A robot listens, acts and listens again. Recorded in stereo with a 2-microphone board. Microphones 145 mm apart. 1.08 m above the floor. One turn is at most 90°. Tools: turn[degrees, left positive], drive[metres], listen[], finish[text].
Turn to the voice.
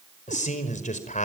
Thought: The man speaking: about 60° left or 120° left.
Action: turn[60]
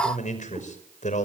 Thought: So it is at 60° left.
Action: turn[60]
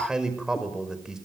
Action: finish[Facing the man speaking.]